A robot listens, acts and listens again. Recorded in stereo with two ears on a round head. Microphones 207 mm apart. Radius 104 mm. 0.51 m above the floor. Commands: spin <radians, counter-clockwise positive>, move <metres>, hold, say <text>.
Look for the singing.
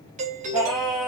spin 0.52
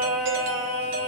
spin -0.52
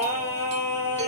spin 0.17
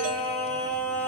spin 0.17
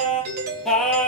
say Facing the singing.